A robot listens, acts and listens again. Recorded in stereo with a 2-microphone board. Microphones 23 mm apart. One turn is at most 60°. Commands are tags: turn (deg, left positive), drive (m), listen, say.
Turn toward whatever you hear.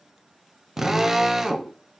<turn deg="-20"/>
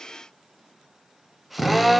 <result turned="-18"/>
<say>Found it: a drill, straight ahead, 1 to 2 m away.</say>